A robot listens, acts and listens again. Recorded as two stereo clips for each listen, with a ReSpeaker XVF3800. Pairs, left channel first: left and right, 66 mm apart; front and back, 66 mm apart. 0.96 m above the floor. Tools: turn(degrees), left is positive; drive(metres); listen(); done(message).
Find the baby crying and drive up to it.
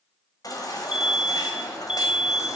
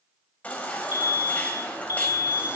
turn(degrees=65)
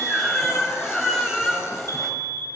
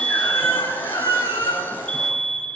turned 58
turn(degrees=10)
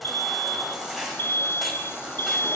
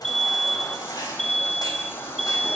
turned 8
drive(metres=1.0)
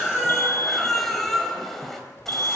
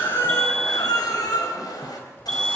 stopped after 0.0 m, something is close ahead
done("Blocked. The baby crying is further on, straight ahead.")